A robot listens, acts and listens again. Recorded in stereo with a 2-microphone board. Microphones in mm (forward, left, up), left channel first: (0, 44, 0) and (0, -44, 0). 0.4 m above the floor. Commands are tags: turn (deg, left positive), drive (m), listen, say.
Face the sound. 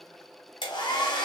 <turn deg="70"/>
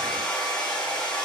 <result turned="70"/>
<turn deg="10"/>
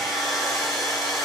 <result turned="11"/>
<say>Found it: a hair dryer, straight ahead.</say>